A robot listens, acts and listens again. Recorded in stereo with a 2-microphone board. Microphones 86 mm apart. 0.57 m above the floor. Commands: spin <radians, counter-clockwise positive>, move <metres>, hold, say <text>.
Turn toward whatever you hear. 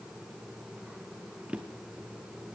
spin -0.52
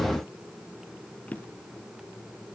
spin 0.35
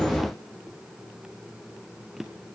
say Facing the drawer.